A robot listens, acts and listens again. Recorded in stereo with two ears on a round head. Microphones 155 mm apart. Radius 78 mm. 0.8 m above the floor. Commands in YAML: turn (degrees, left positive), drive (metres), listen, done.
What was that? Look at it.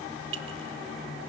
turn: -90
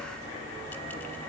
listen: true
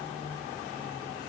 listen: true
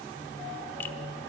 done: "I heard a clink from this way, but can't make it out now."